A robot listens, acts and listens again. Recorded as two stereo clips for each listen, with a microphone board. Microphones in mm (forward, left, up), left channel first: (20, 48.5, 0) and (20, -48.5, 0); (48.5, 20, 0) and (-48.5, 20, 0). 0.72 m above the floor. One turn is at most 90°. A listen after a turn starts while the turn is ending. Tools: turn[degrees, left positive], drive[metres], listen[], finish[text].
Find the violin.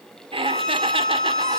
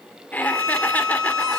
Thought: The violin: 170° left.
Action: turn[90]
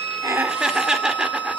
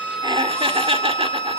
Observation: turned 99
Thought: The violin is now 70° left.
Action: turn[70]
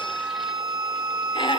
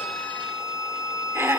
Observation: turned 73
Action: finish[Found it: a violin, straight ahead, over 4 m away.]